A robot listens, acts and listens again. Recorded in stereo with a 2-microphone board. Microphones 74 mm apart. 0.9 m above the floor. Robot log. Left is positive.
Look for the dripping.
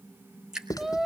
cmd yaw -30
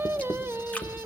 cmd idle
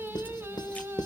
cmd idle
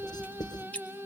note: So it is at 20° left.
cmd yaw +20
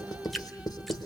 end: Found it: dripping, straight ahead, 1 to 2 m away.